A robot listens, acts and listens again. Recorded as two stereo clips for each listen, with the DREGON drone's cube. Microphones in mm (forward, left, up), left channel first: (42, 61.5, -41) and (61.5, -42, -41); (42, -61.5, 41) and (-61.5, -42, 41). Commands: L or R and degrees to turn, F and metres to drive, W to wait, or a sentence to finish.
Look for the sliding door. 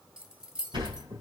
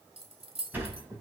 R120
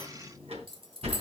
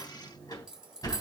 R65
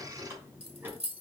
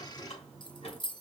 R10
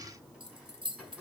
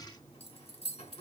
Found it: a sliding door, straight ahead, 2 to 4 m away.